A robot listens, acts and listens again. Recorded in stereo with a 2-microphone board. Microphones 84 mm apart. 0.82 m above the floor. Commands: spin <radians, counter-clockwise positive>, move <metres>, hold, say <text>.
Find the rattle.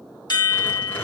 spin 0.44
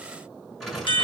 say Facing the rattle.